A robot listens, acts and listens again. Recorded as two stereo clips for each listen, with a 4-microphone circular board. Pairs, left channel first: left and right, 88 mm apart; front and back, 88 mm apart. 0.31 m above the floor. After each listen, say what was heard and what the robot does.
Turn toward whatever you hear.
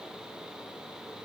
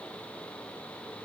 Keep listening.
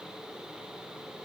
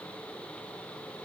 Keep listening.
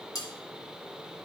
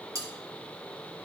The cutlery clinking: 135° left. Turn 135° left.
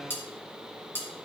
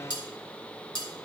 The cutlery clinking is now 25° left. Turn 25° left.
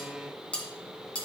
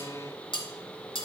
The cutlery clinking is now 15° left. Turn 15° left.
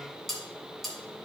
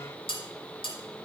Found it: cutlery clinking, straight ahead, 1 to 2 m away.